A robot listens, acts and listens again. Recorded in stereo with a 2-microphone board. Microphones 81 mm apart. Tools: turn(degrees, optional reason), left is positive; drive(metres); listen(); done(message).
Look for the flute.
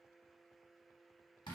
listen()
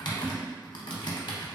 listen()
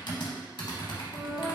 turn(degrees=-20, reason="The flute: about 20° right or 160° right.")
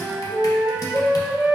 turn(degrees=-135, reason="So it is at 135° right.")
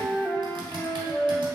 turn(degrees=15, reason="The flute is now 15° left.")
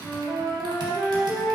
done("Facing the flute, under 1 m away.")